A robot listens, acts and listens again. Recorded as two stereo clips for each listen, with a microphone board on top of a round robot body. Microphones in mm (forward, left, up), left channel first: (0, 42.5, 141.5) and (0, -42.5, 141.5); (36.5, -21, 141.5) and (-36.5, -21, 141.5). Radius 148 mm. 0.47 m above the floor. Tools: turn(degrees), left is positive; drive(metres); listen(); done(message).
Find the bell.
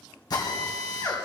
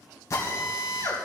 listen()
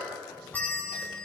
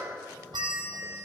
turn(degrees=160)
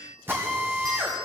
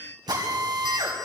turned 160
turn(degrees=-40)
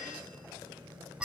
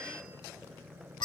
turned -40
turn(degrees=-10)
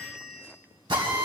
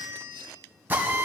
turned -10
done("Facing the bell, 1 to 2 m away.")